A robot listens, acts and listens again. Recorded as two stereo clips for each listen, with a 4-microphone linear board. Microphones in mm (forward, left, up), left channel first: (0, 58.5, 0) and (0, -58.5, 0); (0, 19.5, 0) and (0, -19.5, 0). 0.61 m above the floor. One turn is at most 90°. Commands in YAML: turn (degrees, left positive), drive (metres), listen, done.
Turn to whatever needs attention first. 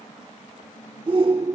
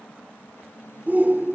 turn: -45
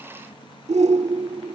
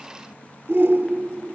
turn: -80
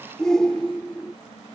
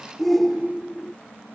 done: "Found it: a shout, straight ahead."